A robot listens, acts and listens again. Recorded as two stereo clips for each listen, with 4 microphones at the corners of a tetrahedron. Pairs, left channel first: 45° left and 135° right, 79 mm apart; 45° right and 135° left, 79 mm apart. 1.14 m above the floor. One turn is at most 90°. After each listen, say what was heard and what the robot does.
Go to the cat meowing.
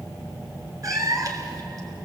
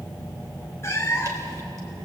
The cat meowing: 95° right. Turn 90° right.
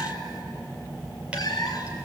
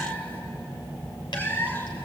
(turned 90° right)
The cat meowing is now 20° left. Turn 20° left.
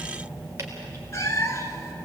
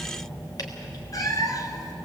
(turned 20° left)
Drive 1.0 m forward.
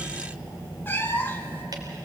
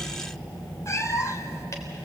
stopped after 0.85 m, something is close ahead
The cat meowing is now 10° right. Turn 10° right.
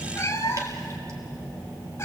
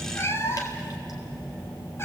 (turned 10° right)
Arrived at the cat meowing, straight ahead.